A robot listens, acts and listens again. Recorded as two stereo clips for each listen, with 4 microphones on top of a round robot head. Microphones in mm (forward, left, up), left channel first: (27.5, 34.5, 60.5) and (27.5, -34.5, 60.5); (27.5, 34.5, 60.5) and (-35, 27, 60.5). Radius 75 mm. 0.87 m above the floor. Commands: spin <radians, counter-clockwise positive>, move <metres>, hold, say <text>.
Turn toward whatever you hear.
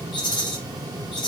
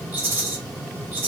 spin 2.18
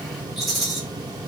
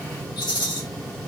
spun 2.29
say Facing the rattle.